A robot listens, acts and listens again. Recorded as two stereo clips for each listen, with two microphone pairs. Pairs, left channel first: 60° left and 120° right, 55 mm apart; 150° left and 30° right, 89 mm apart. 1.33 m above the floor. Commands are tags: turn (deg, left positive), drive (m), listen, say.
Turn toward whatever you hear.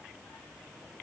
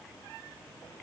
<listen/>
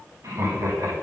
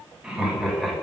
<turn deg="-125"/>
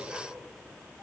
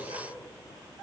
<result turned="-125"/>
<listen/>
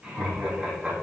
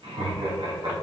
<turn deg="-50"/>
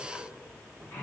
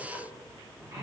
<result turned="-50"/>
<turn deg="10"/>
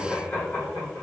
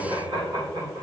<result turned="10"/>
<say>Found it: laughter, straight ahead.</say>